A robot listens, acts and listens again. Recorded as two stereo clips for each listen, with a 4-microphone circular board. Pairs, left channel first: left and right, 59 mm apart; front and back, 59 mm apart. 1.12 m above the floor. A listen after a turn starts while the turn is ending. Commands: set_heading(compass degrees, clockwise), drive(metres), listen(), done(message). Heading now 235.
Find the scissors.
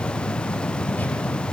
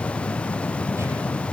listen()
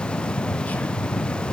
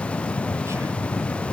listen()
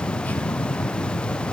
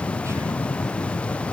done("I can't make out scissors to turn to.")